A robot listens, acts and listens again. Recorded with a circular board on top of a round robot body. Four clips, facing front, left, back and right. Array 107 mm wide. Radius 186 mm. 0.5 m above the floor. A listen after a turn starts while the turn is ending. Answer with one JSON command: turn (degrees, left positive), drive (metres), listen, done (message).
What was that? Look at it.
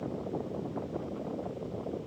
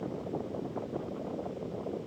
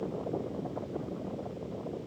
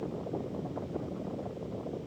{"listen": true}
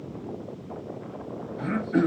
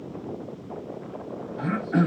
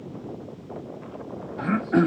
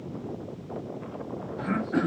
{"turn": 155}
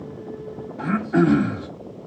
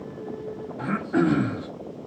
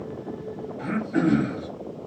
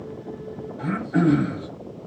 {"done": "Found it: throat clearing, straight ahead, 1 to 2 m away."}